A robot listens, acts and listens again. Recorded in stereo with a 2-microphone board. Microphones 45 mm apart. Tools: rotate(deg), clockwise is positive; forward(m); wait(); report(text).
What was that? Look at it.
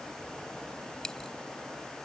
rotate(-30)
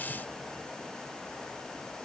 wait()
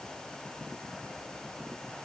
report("I heard a dropped coin, but can't make it out now. It was about 15° right or 135° left.")